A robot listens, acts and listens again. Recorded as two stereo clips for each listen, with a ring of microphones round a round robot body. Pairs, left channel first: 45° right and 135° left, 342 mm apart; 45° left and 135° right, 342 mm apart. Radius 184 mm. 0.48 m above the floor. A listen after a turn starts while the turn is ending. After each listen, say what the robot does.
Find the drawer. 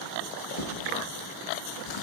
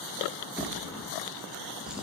Turn 45° right.
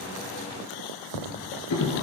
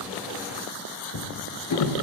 Found it: a drawer, straight ahead, 2 to 4 m away.